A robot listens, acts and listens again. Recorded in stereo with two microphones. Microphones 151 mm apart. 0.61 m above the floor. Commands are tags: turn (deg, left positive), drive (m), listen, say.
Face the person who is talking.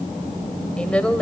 <turn deg="30"/>
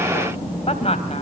<turn deg="135"/>
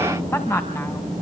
<turn deg="15"/>
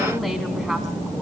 <listen/>
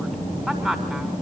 <say>Found it: a woman speaking, straight ahead, over 4 m away.</say>